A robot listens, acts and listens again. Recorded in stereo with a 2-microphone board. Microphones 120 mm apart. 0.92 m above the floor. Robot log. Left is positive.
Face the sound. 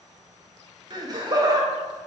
note: The laughter: about 35° right or 145° right.
cmd yaw -35
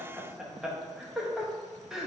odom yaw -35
end: Facing the laughter, under 1 m away.